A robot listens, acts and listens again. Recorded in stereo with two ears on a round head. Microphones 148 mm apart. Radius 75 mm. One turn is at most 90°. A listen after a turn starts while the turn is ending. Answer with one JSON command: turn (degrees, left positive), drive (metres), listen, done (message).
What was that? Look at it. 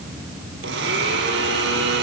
{"turn": -90}
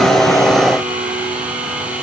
{"done": "Facing the blender, 2 to 4 m away."}